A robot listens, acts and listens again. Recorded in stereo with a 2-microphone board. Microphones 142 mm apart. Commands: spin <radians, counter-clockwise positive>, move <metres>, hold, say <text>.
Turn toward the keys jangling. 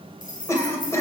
spin 1.22
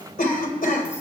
hold
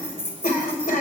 spin 0.35
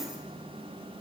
hold
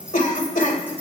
hold
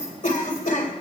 say I heard keys jangling from this way, but can't make it out now.